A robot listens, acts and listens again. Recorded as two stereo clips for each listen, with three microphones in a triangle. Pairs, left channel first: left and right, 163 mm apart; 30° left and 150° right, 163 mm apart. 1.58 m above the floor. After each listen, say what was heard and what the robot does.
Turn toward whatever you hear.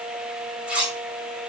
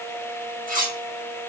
The cutlery clinking: 175° right. Turn 175° right.
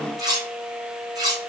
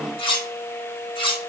The cutlery clinking is now 25° right. Turn 25° right.
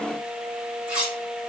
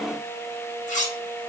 The cutlery clinking is now 10° right. Turn 10° right.
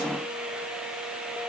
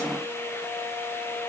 Keep listening.
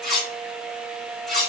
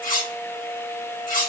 Facing the cutlery clinking.